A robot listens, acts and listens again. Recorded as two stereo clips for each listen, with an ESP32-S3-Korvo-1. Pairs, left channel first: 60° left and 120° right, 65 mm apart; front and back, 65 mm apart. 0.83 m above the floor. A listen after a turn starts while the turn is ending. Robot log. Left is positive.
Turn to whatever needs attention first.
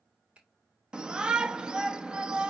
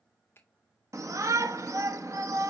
note: The shout: 165° left.
cmd yaw +165
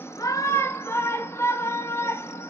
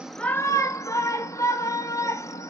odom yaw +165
note: The shout is now 20° left.
cmd yaw +20
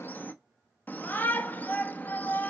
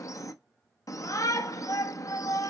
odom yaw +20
end: Facing the shout.